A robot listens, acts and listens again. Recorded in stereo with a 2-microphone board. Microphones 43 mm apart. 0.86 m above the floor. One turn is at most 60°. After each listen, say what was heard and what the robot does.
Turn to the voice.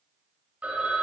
Keep listening.
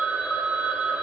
Keep listening.
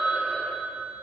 I can't make out anyone speaking to turn to.